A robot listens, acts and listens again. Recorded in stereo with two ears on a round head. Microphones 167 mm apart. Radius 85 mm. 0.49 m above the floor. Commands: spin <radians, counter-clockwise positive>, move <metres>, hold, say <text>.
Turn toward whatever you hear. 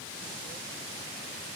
hold
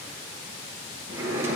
spin -0.52
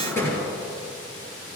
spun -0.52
spin 0.26
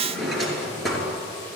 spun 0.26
say Facing the drawer.